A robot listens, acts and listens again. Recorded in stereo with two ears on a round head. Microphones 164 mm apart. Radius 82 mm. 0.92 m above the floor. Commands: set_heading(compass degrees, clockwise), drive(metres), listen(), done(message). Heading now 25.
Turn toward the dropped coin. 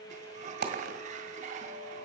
set_heading(80)
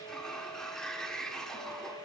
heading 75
listen()
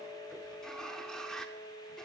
done("I heard a dropped coin, but can't make it out now. It was about 5° right or 75° right.")